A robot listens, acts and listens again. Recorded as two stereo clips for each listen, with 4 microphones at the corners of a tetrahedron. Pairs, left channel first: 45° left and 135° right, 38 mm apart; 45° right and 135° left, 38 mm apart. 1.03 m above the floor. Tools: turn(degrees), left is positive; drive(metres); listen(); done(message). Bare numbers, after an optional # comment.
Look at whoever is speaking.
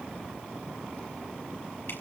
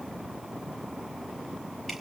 listen()
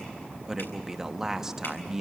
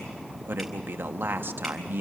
# The man speaking: 150° left.
turn(150)
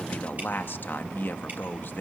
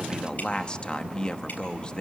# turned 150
# The man speaking is now 20° left.
turn(20)
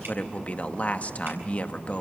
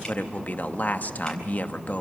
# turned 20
done("Facing the man speaking, 1 to 2 m away.")